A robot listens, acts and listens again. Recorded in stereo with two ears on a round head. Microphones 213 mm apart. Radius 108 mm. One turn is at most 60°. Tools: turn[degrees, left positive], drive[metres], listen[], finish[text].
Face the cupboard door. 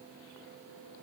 Action: listen[]
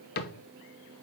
Thought: The cupboard door: about 40° left or 140° left.
Action: turn[40]
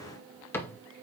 Thought: So it is at 10° left.
Action: turn[10]
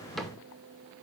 Action: finish[Facing the cupboard door.]